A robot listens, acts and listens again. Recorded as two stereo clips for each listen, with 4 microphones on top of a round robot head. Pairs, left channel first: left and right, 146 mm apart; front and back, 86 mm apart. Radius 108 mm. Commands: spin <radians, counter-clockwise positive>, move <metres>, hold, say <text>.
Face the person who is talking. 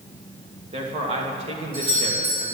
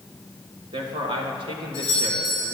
spin -2.53
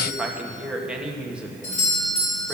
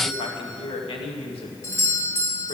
say Facing the man speaking, 1 to 2 m away.